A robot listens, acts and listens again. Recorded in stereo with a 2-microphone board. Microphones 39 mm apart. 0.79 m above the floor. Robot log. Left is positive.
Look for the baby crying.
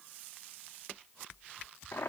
cmd idle
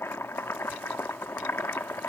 cmd idle
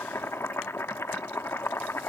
end: I can't make out a baby crying to turn to.